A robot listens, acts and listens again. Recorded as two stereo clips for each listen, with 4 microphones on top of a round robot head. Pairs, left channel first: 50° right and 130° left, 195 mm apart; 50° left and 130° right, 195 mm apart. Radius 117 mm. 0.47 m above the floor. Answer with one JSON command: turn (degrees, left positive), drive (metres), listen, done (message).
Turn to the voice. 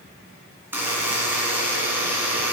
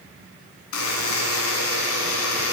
{"listen": true}
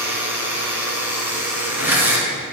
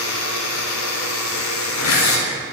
{"listen": true}
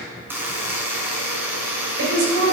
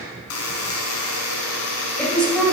{"turn": 135}
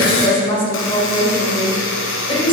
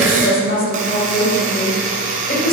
{"turn": 10}
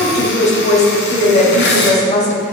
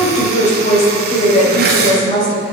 {"done": "Found it: a woman speaking, straight ahead."}